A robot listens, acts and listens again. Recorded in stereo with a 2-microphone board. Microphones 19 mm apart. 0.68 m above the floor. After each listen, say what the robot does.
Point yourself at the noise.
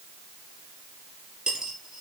Turn 50° right.
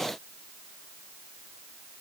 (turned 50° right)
Keep listening.
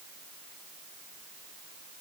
I heard a dropped coin, but can't make it out now. It was about straight ahead or 80° right.